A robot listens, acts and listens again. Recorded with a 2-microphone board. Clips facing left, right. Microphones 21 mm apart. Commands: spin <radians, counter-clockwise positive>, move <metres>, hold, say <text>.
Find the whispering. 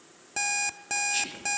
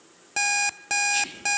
spin -0.52
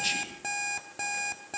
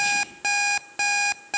hold
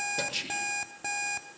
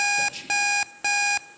spin 0.52
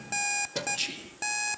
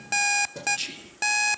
say Facing the whispering, 1 to 2 m away.